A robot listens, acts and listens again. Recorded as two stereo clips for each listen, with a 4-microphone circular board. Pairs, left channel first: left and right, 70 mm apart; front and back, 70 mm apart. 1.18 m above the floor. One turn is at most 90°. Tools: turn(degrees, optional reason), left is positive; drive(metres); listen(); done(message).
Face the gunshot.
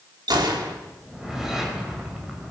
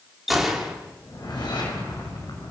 turn(degrees=-90, reason="The gunshot: 90° right.")
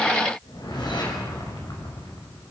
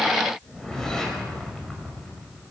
done("I heard a gunshot from this way, but can't make it out now.")